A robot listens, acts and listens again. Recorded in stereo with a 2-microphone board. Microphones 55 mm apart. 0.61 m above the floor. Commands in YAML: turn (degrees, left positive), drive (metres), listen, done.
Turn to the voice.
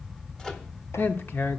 turn: 40
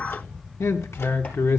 turn: 95
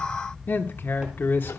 turn: 50
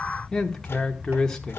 turn: 15
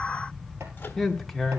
done: "Found it: a man speaking, straight ahead, 1 to 2 m away."